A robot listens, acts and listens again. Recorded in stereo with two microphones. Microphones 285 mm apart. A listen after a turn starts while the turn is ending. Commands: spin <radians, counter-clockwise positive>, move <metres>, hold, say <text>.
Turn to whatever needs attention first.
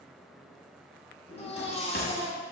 spin 0.35
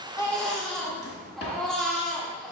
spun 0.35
say Facing the baby crying.